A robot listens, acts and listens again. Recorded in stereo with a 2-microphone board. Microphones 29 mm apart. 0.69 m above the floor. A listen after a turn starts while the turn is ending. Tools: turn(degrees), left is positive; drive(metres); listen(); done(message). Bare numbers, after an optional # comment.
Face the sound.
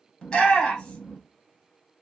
# The shout: about 35° left or 145° left.
turn(35)
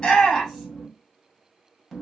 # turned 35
done("Facing the shout, 1 to 2 m away.")